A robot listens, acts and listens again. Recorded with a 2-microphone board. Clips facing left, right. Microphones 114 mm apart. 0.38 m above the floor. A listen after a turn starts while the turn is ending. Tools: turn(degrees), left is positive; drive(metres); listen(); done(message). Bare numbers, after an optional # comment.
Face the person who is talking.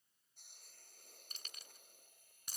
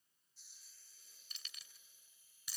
listen()
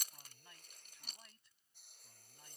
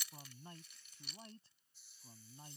# The man speaking: about 30° right or 150° right.
turn(-30)
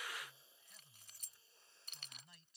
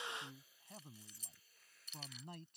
# So it is at 115° right.
turn(-115)
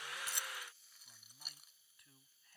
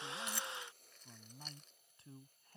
# The man speaking is now 35° right.
turn(-35)
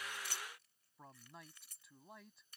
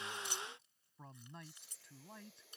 done("Facing the man speaking.")